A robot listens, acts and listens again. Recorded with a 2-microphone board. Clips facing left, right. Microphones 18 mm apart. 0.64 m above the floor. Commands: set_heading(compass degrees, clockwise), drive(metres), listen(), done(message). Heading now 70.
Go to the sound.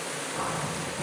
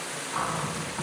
set_heading(120)
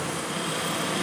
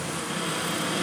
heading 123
drive(1.0)
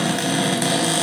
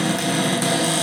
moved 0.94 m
set_heading(113)
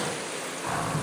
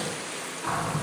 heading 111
drive(1.0)
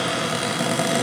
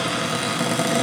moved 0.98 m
drive(1.0)
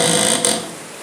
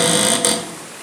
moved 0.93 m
drive(1.0)
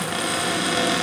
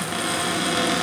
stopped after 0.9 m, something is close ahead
done("I am next to the cupboard door.")